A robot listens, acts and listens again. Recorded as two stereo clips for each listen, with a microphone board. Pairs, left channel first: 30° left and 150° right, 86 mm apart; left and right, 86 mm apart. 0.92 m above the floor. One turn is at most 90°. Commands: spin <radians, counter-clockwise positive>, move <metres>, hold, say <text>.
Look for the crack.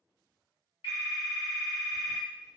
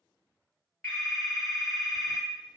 hold
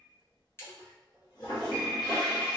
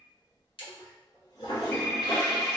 spin 1.57
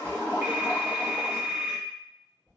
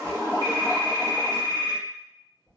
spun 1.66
say Facing where the crack came from. I can't hear it now.